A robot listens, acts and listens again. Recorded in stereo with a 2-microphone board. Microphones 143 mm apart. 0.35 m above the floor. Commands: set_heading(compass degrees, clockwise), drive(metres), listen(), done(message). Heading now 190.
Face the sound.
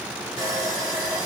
set_heading(215)
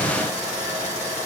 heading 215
set_heading(345)
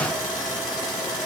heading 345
set_heading(320)
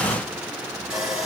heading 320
done("Facing the sawing.")